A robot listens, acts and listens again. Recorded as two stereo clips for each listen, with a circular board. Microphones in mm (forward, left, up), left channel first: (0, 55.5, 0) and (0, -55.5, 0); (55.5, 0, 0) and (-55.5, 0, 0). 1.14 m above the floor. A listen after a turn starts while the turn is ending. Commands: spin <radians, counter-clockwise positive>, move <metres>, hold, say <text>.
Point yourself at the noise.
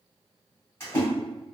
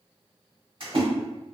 spin 2.62
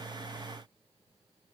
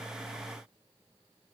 say I heard a splash from this way, but can't make it out now.